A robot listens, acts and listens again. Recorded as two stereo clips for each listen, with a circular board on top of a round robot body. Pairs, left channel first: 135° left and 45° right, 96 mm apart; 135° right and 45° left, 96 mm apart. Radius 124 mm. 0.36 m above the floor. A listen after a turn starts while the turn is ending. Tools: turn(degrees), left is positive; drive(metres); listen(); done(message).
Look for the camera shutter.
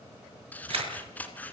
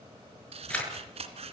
turn(degrees=-60)
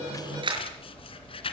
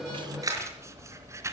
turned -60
turn(degrees=-10)
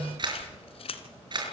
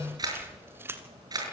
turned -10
done("Facing the camera shutter.")